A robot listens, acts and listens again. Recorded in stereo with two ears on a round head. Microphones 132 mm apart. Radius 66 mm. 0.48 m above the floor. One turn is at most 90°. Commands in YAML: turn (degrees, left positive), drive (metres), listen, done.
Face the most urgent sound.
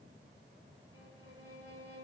listen: true
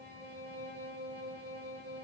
listen: true
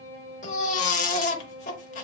turn: 55
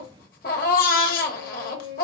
turn: 70
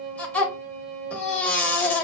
turn: 10
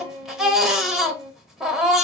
done: "Found it: a baby crying, straight ahead."